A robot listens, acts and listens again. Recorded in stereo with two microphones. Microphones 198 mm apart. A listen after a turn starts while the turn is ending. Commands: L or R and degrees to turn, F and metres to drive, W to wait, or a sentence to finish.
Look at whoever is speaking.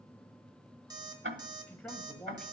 L30
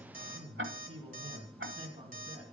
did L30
R30
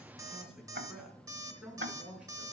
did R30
Facing the man speaking.